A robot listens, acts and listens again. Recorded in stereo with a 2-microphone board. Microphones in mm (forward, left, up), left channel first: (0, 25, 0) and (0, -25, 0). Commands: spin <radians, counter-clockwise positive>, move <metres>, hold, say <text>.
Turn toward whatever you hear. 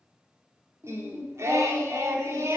spin -1.22
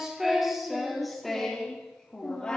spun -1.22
spin 0.26
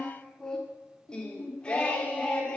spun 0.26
spin 0.35
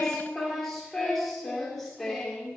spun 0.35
say Facing the singing, 2 to 4 m away.